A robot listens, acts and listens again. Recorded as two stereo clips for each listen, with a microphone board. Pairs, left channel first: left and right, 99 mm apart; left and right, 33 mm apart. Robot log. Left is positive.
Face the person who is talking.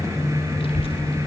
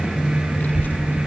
note: The child speaking: about 60° left or 120° left.
cmd yaw +60
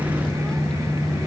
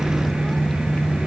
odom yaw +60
cmd idle
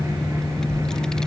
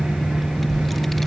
end: Facing the child speaking.